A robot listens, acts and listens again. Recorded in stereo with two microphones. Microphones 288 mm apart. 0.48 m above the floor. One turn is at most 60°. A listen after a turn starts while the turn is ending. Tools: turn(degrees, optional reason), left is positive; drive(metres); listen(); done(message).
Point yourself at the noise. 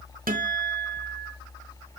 turn(degrees=-30, reason="The guitar: about 30° right or 150° right.")
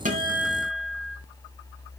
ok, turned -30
done("Facing the guitar, 1 to 2 m away.")